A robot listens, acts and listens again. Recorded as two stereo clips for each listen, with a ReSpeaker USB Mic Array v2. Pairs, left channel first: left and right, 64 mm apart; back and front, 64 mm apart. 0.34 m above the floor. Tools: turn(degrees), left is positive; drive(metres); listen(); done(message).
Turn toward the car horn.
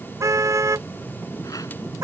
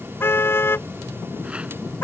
turn(degrees=-130)
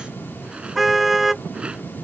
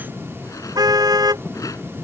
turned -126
done("Found it: a car horn, straight ahead.")